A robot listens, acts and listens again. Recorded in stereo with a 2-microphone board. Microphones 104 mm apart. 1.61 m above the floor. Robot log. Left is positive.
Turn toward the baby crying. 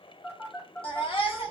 note: The baby crying: about 60° left or 120° left.
cmd yaw +60
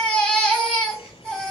end: Found it: a baby crying, straight ahead.